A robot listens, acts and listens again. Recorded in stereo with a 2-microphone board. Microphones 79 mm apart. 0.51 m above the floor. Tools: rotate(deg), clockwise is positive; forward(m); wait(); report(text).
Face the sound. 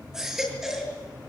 rotate(30)
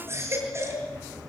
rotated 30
rotate(145)
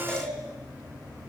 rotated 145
rotate(-10)
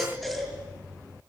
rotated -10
report("Facing the baby crying.")